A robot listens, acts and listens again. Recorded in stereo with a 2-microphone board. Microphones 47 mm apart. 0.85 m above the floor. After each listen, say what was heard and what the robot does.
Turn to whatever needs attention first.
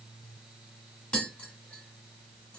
Keep listening.
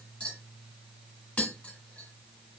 Keep listening.
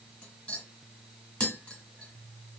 I can't make out anything urgent, only tapping.